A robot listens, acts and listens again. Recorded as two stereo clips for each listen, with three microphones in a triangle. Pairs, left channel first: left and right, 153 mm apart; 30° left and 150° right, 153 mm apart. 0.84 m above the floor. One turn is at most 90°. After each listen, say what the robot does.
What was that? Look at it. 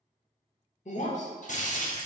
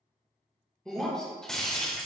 Turn 90° left.
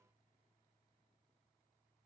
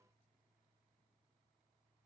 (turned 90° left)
Turn 25° left.
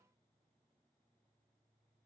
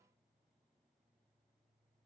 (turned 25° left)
Facing where the breaking glass came from. I can't hear it now.